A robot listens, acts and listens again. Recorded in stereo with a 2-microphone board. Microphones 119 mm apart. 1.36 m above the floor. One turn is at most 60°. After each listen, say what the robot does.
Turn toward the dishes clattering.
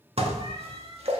Turn 55° right.
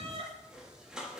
Facing the dishes clattering, 1 to 2 m away.